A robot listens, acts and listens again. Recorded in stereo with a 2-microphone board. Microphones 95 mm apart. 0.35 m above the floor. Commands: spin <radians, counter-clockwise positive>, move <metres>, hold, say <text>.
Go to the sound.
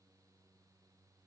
hold
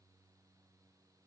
hold
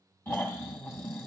spin 0.44
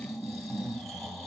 move 1.0
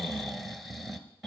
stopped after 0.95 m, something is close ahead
say I am next to the snoring.